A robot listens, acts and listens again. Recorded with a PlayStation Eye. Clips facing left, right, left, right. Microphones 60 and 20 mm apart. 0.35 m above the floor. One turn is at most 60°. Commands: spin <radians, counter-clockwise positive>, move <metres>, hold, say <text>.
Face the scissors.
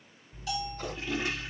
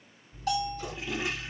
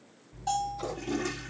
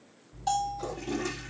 spin 0.79
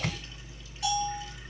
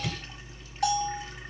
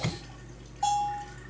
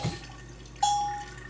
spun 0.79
spin 1.05
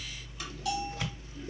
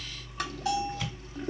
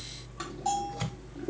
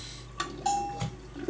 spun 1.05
spin 0.52
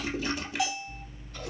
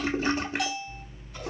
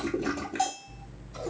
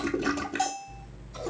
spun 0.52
spin -0.17
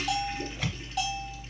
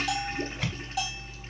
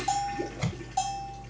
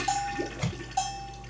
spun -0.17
say Facing the scissors, 1 to 2 m away.